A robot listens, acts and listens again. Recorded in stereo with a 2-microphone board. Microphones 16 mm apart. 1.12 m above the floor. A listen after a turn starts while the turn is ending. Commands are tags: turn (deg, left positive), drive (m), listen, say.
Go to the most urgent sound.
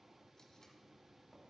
<listen/>
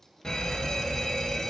<turn deg="60"/>
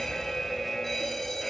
<turn deg="30"/>
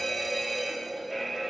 <drive m="1.0"/>
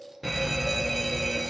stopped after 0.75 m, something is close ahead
<say>Arrived at the fire alarm, straight ahead.</say>